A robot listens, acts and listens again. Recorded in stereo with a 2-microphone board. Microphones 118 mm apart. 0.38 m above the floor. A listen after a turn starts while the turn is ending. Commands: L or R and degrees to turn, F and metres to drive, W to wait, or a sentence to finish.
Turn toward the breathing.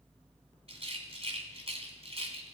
W
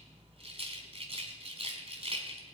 W
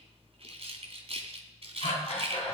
L70
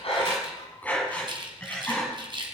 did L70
L15
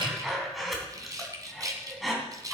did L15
Found it: breathing, straight ahead.